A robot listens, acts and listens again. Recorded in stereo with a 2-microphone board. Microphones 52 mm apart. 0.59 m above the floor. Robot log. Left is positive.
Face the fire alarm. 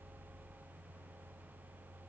cmd idle
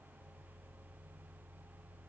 cmd idle
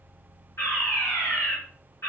note: The fire alarm: about 55° left or 125° left.
cmd yaw +55
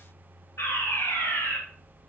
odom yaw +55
note: So it is at 65° left.
cmd yaw +65
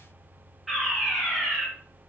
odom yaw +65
end: Found it: a fire alarm, straight ahead, over 4 m away.